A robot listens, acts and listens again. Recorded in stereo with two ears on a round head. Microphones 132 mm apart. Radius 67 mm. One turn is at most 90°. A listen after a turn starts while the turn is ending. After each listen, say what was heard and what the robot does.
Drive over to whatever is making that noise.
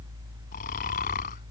The snoring: about 60° left or 120° left. Turn 60° left.
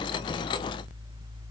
Keep listening.
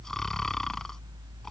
Drive 1.0 m forward.
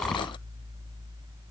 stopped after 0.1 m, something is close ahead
Keep listening.
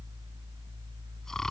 Keep listening.
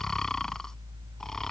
Something is in my way. I am facing the snoring but have not reached it.